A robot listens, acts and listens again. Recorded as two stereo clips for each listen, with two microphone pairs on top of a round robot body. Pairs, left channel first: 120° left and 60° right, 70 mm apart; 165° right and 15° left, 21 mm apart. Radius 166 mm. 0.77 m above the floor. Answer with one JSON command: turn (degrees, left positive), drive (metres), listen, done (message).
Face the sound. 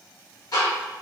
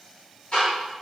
{"turn": 160}
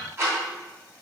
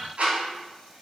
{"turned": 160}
{"done": "Found it: ticking, straight ahead."}